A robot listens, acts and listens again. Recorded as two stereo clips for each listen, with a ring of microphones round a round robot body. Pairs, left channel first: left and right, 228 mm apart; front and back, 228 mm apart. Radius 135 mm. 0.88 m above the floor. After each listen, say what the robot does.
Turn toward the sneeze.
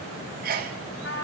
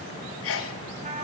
Turn 35° right.
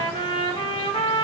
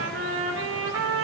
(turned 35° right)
Facing where the sneeze came from. I can't hear it now.